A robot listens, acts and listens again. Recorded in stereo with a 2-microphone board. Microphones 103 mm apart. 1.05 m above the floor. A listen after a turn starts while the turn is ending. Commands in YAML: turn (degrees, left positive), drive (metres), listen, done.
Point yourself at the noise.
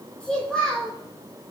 turn: 30
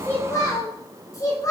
turn: 150
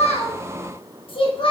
turn: 60
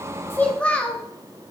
turn: 15
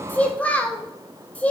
turn: 15
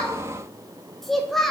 done: "Facing the child speaking."